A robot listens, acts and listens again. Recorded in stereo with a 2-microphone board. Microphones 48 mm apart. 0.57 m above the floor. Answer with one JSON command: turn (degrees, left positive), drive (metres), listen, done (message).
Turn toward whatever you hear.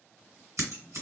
{"turn": -65}
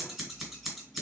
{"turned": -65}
{"done": "Facing the scissors."}